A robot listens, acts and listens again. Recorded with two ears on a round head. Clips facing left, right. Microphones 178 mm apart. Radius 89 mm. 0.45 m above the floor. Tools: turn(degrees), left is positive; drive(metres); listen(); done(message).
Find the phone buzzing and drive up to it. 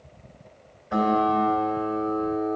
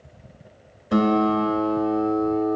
listen()
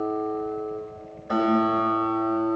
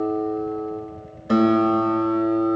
listen()
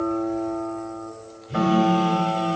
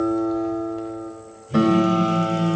turn(degrees=60)
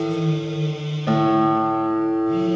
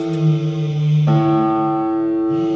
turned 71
turn(degrees=35)
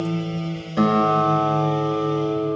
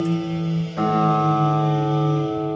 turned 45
turn(degrees=-10)
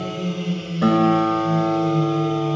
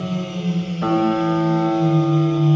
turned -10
drive(metres=1.0)
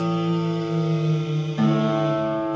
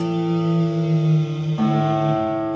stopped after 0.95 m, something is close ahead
done("I am next to the phone buzzing.")